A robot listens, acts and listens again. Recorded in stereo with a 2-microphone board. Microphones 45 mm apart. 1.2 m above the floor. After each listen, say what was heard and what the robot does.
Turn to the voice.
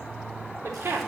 The woman speaking: about 70° right or 110° right. Turn 70° right.
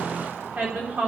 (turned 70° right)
So it is at 35° right. Turn 35° right.
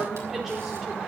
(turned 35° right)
Found it: a woman speaking, straight ahead.